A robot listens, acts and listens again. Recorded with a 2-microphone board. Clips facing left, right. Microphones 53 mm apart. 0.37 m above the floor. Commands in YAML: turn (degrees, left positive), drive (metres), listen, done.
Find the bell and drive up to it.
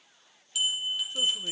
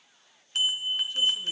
turn: -45
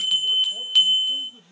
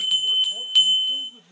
drive: 1.0
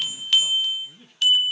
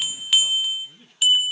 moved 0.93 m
drive: 1.0
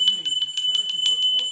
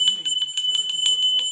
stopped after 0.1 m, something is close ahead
turn: -10
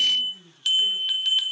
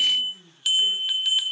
done: "I am next to the bell."